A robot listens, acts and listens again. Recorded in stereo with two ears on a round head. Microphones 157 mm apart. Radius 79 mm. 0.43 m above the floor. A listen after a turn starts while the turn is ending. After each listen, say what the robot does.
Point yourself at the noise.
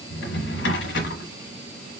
Turn 70° left.
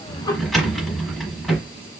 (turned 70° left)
Facing the drawer.